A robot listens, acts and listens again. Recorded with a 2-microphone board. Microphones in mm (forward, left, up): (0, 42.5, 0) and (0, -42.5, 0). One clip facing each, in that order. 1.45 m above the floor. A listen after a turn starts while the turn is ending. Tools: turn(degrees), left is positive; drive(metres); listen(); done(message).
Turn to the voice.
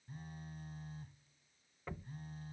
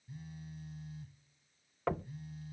listen()
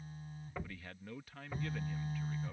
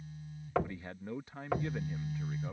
turn(degrees=-25)
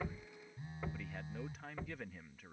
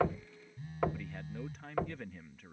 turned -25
done("Facing the man speaking.")